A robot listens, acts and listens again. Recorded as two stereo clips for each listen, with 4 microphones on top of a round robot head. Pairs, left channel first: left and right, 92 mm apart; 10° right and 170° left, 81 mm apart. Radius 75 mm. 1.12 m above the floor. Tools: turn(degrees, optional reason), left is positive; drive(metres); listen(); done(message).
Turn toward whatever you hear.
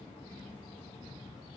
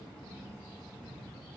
listen()
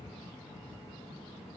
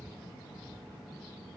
listen()
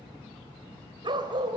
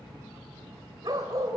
turn(degrees=-130, reason="The dog barking: 130° right.")
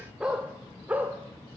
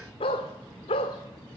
turn(degrees=-15, reason="The dog barking is now 15° right.")
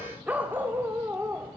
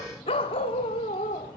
turn(degrees=-15, reason="The dog barking is now 15° right.")
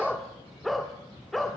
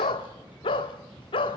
done("Found it: a dog barking, straight ahead.")